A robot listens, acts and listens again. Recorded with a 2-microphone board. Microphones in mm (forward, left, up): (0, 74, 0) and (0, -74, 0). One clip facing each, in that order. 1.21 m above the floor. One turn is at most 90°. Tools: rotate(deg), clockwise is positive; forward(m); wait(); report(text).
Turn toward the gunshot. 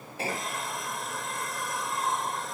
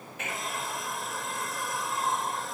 rotate(-35)
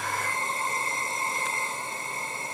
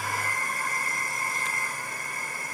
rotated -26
wait()
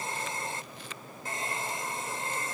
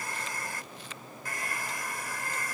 report("I heard a gunshot, but can't make it out now. It was about 10° left or 120° left.")